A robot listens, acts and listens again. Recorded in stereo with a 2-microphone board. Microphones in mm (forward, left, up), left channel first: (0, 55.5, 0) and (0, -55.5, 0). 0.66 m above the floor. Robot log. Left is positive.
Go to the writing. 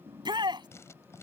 note: The writing: about 25° left or 155° left.
cmd yaw +25
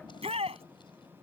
cmd idle
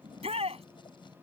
cmd idle
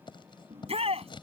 note: So it is at 130° left.
cmd yaw +130
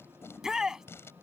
note: The writing is now 25° left.
cmd yaw +25
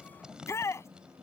cmd fwd 1.0
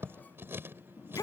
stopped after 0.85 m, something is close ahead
note: The writing is now 20° right.
cmd yaw -20
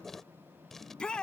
end: Blocked. The writing is further on, straight ahead.